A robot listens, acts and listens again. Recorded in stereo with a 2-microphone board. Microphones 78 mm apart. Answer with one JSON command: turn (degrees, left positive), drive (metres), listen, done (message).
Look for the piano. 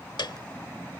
{"turn": 70}
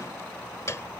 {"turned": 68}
{"turn": 40}
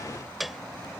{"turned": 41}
{"done": "Facing the piano."}